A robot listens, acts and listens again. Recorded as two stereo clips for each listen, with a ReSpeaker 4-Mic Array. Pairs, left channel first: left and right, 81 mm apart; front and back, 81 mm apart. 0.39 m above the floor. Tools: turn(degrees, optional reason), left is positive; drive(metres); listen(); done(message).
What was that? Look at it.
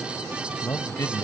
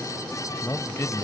turn(degrees=45, reason="The man speaking: 45° left.")
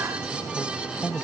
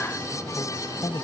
turn(degrees=10, reason="The man speaking is now 10° left.")
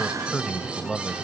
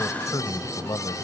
done("Found it: a man speaking, straight ahead.")